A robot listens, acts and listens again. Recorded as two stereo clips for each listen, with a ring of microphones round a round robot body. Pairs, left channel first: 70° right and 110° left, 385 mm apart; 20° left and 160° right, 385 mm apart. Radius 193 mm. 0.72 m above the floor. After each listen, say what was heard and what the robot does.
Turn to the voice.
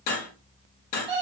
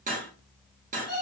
Keep listening.
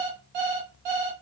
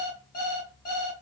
Keep listening.
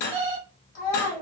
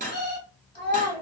The child speaking: 55° right. Turn 55° right.
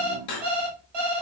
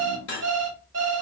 Keep listening.
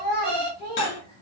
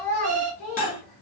Found it: a child speaking, straight ahead.